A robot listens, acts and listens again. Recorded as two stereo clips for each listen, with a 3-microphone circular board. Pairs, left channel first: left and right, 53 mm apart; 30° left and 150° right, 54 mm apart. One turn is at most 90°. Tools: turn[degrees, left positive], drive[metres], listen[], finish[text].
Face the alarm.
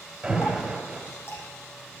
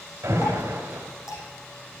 Thought: The alarm: 165° right.
Action: turn[-90]
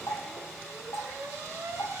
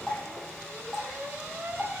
Thought: The alarm is now 105° right.
Action: turn[-90]
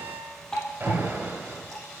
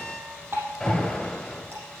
Thought: The alarm is now 45° right.
Action: turn[-45]
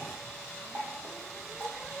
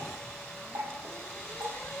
Action: listen[]
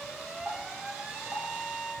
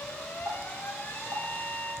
Thought: The alarm is now 15° right.
Action: turn[-15]
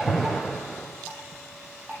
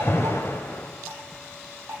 Action: finish[Facing the alarm, 2 to 4 m away.]